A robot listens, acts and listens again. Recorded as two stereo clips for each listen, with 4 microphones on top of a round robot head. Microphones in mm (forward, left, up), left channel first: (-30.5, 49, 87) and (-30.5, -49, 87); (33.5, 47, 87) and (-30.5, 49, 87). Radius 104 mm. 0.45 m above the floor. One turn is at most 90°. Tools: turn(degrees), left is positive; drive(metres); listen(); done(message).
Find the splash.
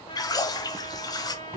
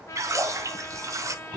turn(degrees=90)
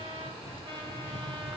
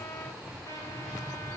turn(degrees=50)
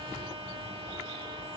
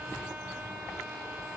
done("I heard a splash from this way, but can't make it out now.")